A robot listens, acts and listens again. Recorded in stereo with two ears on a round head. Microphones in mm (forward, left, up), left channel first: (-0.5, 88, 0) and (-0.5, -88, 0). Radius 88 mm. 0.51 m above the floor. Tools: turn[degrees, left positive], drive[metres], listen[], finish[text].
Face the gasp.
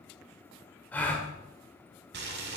Action: turn[30]
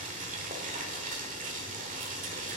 Action: listen[]
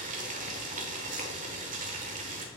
Action: finish[I heard a gasp, but can't make it out now. It was about 20° right or 140° left.]